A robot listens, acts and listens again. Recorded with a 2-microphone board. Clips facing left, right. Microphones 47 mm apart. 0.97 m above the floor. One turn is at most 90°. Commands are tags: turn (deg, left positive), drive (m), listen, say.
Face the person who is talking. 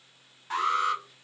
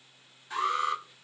<listen/>
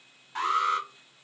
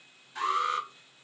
<listen/>
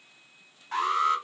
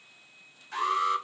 <say>I can't make out anyone speaking, only an alarm.</say>